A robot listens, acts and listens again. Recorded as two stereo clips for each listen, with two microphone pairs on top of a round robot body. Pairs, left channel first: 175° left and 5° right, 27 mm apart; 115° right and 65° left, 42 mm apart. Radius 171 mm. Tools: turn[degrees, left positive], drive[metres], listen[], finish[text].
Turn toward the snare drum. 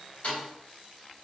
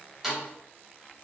Thought: The snare drum: 150° left.
Action: turn[150]
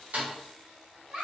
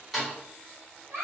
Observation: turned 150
Thought: The snare drum is now 25° right.
Action: turn[-25]
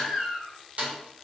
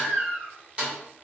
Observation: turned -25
Action: finish[Found it: a snare drum, straight ahead.]